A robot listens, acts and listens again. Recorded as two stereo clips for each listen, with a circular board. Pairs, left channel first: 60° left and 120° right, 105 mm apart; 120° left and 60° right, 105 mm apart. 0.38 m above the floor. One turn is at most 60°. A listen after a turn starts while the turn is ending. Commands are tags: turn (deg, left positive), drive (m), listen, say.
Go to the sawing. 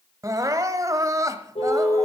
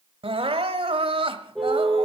<listen/>
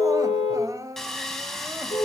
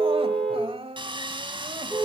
<turn deg="-25"/>
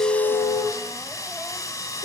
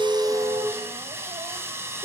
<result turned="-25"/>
<drive m="1.0"/>
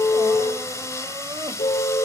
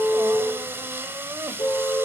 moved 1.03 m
<drive m="1.0"/>
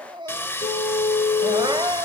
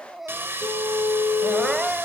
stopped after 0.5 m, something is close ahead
<say>I am next to the sawing.</say>